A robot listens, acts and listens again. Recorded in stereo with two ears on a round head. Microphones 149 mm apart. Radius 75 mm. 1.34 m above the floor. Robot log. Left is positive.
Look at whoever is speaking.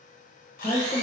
note: The woman speaking: about 35° left or 145° left.
cmd yaw +35
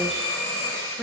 end: Facing the woman speaking, 1 to 2 m away.